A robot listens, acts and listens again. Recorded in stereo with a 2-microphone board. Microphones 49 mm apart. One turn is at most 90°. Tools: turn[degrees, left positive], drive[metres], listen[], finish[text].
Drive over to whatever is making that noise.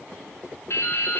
Thought: The dripping: about 60° left or 120° left.
Action: turn[60]
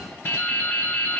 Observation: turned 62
Thought: So it is at 55° left.
Action: turn[55]
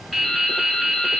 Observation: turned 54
Action: drive[1.0]
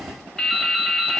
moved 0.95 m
Thought: The dripping is now 10° left.
Action: turn[10]
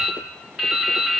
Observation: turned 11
Action: drive[1.0]
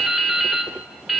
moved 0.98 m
Action: drive[1.0]
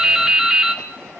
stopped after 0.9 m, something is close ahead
Thought: The dripping is now 15° right.
Action: turn[-15]
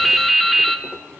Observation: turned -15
Action: finish[I am next to the dripping.]